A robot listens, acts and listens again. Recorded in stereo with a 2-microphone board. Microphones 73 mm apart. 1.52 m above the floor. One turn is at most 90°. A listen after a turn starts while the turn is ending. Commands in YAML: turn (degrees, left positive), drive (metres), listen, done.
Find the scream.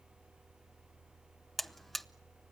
listen: true
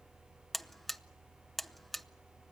listen: true
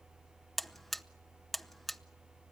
done: "I can't make out a scream, only a buzzer."